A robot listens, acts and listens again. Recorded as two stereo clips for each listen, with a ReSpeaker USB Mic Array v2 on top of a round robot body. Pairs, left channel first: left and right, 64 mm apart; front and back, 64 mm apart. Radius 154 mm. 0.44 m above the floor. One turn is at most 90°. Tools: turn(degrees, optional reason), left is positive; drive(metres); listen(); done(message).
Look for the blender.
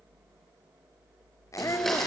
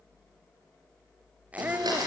turn(degrees=90, reason="The blender: 175° left.")
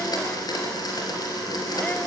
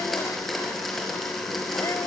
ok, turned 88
turn(degrees=90, reason="The blender is now 90° left.")
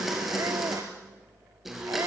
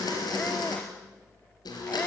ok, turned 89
done("Found it: a blender, straight ahead, over 4 m away.")